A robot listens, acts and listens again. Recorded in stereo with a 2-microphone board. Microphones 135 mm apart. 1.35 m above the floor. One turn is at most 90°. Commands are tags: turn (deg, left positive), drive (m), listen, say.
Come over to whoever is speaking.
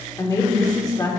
<turn deg="25"/>
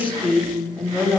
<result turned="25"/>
<drive m="1.0"/>
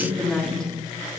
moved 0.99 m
<drive m="1.0"/>
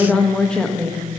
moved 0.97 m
<drive m="1.0"/>
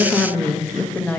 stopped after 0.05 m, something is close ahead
<turn deg="10"/>
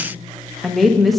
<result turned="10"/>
<say>Arrived at the woman speaking, straight ahead.</say>